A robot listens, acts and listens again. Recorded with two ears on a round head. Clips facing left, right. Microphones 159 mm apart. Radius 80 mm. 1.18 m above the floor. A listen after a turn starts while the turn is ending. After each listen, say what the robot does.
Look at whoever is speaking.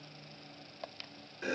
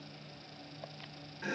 Keep listening.
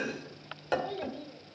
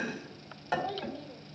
Turn 30° left.
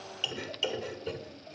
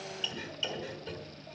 Keep listening.
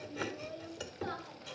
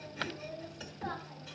Turn 130° left.
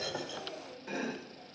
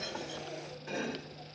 Keep listening.
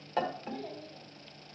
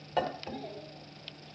Turn 15° left.
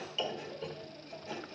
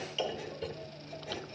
Keep listening.
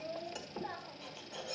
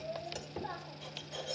Facing the child speaking.